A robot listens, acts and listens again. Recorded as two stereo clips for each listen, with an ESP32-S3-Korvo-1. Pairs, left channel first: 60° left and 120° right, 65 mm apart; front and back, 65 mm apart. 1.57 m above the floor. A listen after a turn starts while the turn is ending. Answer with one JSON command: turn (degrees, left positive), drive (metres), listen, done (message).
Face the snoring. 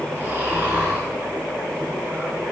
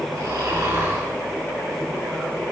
{"turn": 180}
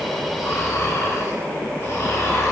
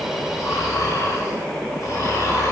{"turn": 15}
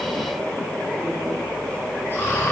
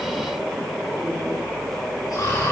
{"done": "Facing the snoring."}